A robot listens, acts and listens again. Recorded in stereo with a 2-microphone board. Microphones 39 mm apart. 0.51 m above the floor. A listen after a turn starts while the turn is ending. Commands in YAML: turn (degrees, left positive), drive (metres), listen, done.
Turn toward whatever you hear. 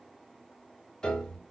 turn: 20
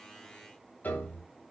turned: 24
turn: 135
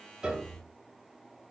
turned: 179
turn: -45
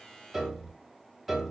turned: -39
done: "Found it: a piano, straight ahead."